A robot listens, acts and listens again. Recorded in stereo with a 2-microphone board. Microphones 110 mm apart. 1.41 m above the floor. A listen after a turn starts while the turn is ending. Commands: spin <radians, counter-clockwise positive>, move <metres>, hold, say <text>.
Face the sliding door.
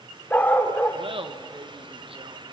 hold
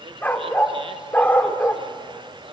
hold
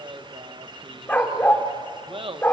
say I can't make out a sliding door, only a dog barking and laughter.